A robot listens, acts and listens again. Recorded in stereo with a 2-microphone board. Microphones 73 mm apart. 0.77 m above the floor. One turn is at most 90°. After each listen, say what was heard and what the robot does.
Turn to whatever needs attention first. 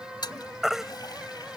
Turn 30° right.
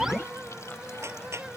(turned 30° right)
Keep listening.
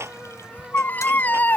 So it is at 25° left. Turn 25° left.
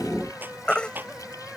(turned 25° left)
The baby crying is now 15° left. Turn 15° left.
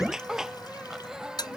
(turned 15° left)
Found it: a baby crying, straight ahead.